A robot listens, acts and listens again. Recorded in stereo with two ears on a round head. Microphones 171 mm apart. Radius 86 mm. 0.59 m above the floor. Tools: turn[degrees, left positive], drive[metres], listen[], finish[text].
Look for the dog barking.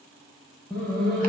Action: turn[30]
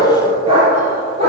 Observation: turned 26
Thought: So it is at 35° right.
Action: turn[-35]
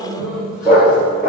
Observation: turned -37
Action: finish[Found it: a dog barking, straight ahead, 2 to 4 m away.]